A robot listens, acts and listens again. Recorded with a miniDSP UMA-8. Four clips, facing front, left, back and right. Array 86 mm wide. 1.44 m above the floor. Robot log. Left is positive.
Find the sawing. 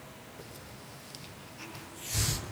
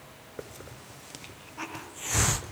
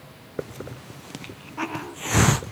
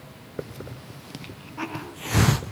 cmd idle
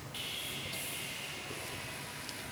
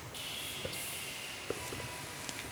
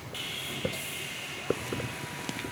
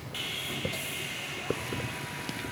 note: The sawing: 115° right.
cmd yaw -115
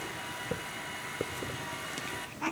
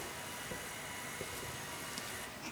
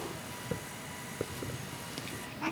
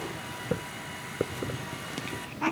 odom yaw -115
cmd idle
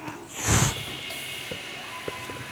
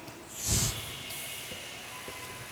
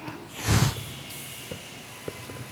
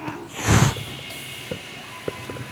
note: The sawing is now 30° right.
cmd yaw -30
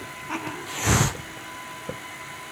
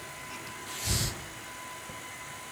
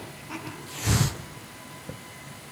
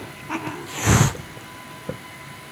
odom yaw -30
note: The sawing is now 10° right.
cmd yaw -10
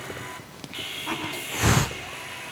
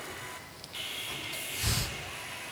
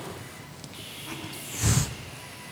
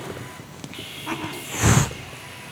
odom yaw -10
end: Found it: sawing, straight ahead.